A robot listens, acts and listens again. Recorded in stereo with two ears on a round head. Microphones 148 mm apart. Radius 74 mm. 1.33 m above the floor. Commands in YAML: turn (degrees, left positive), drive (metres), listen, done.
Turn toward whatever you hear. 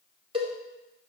turn: -35
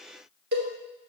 turn: -110
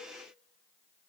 listen: true
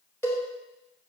turn: 15
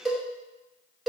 done: "Facing the cowbell, 2 to 4 m away."